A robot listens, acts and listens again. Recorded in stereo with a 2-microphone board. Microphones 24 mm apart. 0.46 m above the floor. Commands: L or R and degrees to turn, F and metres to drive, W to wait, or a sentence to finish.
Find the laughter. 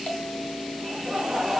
R15
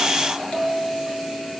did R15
W
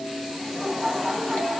L10
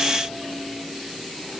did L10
W
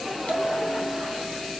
W
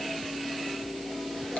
Facing where the laughter came from. I can't hear it now.